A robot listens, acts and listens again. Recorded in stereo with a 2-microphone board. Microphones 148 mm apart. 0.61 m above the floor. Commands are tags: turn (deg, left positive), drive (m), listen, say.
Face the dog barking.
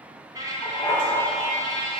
<turn deg="35"/>
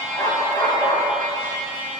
<turn deg="25"/>
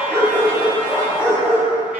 <turn deg="20"/>
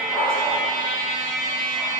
<say>Facing the dog barking.</say>